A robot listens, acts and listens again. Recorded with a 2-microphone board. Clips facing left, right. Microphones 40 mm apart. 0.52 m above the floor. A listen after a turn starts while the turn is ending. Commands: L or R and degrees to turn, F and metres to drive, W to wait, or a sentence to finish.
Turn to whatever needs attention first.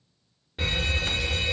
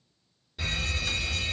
L35
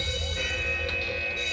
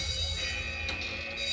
L110
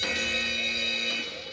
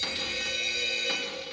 L10
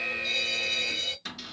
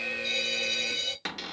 Facing the alarm, under 1 m away.